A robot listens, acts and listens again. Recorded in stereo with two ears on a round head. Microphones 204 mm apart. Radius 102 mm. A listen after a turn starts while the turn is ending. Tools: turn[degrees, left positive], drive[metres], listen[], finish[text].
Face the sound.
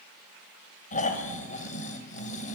Thought: The snoring: about 35° left or 145° left.
Action: turn[35]
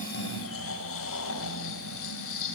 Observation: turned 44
Thought: So it is at 100° left.
Action: turn[100]
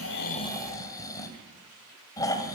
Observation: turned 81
Thought: The snoring is now 15° left.
Action: turn[15]
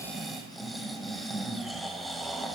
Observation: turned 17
Action: finish[Facing the snoring, 2 to 4 m away.]